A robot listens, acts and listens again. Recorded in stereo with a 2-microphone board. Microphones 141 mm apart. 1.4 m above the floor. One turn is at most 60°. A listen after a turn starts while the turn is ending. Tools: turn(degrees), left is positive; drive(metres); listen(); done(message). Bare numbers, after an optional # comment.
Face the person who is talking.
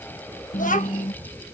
# The child speaking: about 60° left or 120° left.
turn(60)
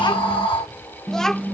done("Found it: a child speaking, straight ahead.")